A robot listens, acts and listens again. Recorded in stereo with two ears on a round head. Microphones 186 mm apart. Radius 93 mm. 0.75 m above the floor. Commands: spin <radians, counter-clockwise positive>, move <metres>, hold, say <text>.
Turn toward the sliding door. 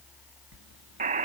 spin -1.13
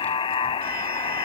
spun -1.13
hold
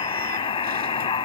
hold
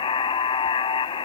say I heard a sliding door, but can't make it out now. It was about straight ahead or 50° right.